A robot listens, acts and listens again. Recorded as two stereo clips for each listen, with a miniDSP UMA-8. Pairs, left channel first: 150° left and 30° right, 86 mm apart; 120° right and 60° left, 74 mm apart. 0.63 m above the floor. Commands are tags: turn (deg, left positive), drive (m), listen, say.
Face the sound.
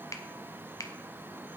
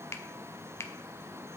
<turn deg="-165"/>
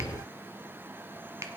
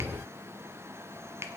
<turn deg="20"/>
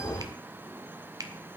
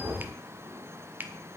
<say>Facing the finger snap.</say>